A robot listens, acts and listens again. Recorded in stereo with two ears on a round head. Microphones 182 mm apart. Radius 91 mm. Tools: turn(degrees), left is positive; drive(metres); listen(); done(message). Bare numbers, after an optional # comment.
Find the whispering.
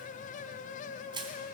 listen()
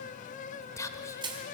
# The whispering: about 15° left or 165° left.
turn(15)
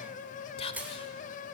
# So it is at 150° left.
turn(150)
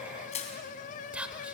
done("Found it: whispering, straight ahead, 1 to 2 m away.")